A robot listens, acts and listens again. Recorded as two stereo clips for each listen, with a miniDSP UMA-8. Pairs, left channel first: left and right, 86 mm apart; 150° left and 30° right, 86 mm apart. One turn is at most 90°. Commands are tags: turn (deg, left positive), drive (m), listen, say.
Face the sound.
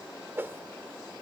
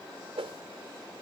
<turn deg="-25"/>
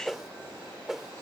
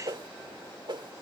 <say>Found it: a whoosh, straight ahead.</say>